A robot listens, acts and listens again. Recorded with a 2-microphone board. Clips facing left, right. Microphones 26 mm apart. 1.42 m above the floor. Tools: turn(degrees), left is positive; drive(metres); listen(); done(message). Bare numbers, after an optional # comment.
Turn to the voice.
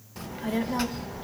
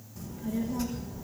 # The child speaking: about 65° left or 115° left.
turn(65)
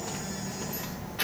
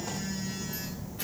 # So it is at 55° left.
turn(55)
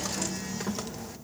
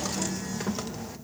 done("Found it: a child speaking, straight ahead.")